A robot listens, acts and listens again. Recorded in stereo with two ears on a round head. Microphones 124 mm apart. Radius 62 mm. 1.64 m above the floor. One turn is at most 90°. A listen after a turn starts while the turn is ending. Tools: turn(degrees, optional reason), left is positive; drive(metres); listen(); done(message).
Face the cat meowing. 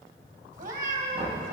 turn(degrees=-60, reason="The cat meowing: about 60° right or 120° right.")
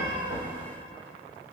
listen()
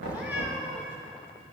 turn(degrees=-10, reason="So it is at 10° right.")
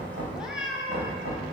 done("Facing the cat meowing.")